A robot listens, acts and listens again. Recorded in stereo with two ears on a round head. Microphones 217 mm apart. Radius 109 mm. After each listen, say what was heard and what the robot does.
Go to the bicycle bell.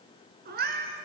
Keep listening.
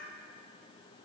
Keep listening.
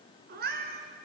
I can't make out a bicycle bell to turn to.